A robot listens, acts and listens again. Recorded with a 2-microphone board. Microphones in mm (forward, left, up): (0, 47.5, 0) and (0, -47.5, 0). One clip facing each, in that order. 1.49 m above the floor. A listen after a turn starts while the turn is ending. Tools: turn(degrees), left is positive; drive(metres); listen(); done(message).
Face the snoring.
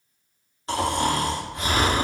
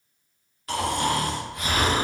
turn(degrees=30)
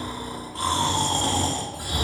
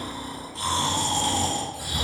turn(degrees=120)
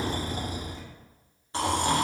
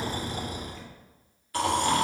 turn(degrees=25)
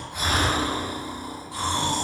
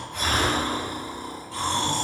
turn(degrees=10)
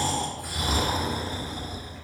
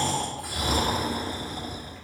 done("Found it: snoring, straight ahead.")